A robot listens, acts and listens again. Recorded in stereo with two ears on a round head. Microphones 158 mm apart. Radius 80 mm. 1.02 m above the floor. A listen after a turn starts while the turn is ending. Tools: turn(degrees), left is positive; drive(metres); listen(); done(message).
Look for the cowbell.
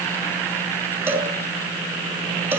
turn(degrees=-30)
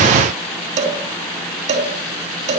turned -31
turn(degrees=-135)
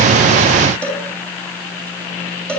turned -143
done("Found it: a cowbell, straight ahead, 2 to 4 m away.")